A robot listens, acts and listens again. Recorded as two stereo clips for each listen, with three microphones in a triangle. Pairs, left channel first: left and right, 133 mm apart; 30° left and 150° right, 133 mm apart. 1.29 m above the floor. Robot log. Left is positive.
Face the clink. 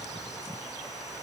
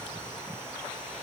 cmd idle
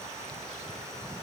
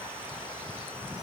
cmd idle
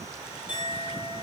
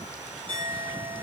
note: The clink: 100° right.
cmd yaw -100
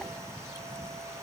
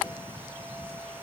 cmd idle
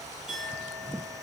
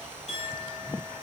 end: Facing the clink, 2 to 4 m away.